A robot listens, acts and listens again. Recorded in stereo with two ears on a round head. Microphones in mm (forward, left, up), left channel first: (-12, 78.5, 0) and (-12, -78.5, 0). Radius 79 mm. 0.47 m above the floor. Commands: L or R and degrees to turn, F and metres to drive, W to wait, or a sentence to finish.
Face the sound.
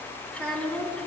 L30
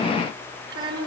R25
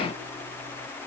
W
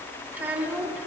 R10
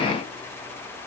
W
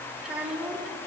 Facing the child speaking.